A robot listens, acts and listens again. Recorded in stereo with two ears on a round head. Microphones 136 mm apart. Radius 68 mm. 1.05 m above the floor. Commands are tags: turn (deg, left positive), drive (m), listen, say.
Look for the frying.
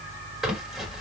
<listen/>
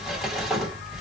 <listen/>
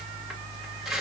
<say>I can't make out frying, only crumpling.</say>